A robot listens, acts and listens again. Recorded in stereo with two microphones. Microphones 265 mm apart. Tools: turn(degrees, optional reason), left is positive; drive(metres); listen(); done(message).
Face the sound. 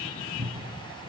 turn(degrees=-30, reason="The cupboard door: about 30° right or 150° right.")
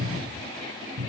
turn(degrees=-115, reason="So it is at 115° right.")
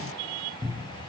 done("Facing the cupboard door, 2 to 4 m away.")